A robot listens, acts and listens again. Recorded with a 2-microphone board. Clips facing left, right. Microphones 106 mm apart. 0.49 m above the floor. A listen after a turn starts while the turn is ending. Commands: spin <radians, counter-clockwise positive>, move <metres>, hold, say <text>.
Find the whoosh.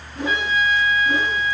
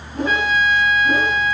spin -0.87
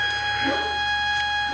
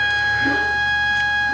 hold
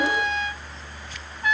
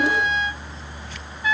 hold
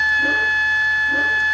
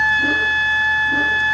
say I heard a whoosh, but can't make it out now. It was about straight ahead or 80° right.